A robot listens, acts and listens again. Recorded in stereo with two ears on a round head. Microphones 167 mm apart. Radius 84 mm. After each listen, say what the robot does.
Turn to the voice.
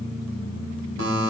Keep listening.
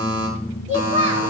Turn 40° right.
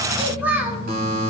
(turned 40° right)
Turn 10° right.
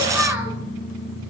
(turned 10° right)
Keep listening.
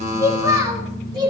Turn 25° right.
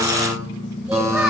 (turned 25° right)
Facing the child speaking.